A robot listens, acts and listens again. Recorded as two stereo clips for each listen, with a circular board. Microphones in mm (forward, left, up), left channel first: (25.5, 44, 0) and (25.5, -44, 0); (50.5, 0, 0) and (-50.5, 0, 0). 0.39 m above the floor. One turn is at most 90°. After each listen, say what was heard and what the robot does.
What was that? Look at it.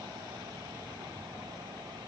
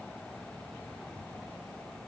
Keep listening.
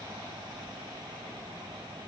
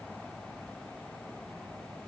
Keep listening.
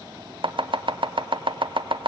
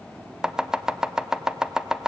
The chopping: 95° right. Turn 90° right.
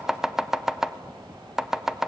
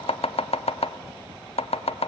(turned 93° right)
Facing the chopping.